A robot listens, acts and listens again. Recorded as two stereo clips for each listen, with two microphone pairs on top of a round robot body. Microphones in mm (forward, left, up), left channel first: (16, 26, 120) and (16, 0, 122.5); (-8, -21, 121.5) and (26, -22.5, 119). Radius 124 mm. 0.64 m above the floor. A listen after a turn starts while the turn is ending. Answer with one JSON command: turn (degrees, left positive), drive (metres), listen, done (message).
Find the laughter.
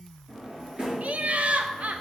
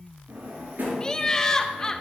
{"turn": -110}
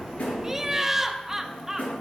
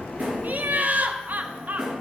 {"turn": -15}
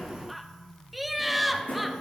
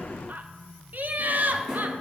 {"done": "Found it: laughter, straight ahead, 1 to 2 m away."}